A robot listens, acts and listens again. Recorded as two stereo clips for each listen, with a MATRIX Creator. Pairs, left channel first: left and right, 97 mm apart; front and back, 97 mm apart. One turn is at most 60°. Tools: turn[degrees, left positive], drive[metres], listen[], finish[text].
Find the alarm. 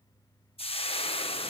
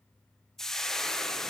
Action: listen[]
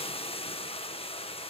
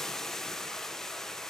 Action: listen[]
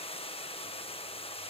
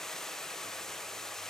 Action: finish[I can't make out an alarm to turn to.]